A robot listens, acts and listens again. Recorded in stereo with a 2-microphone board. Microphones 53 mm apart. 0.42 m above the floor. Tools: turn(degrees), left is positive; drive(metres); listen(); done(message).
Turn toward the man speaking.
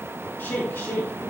turn(degrees=55)
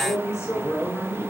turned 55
turn(degrees=50)
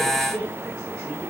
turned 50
turn(degrees=10)
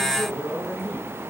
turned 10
done("Facing the man speaking, over 4 m away.")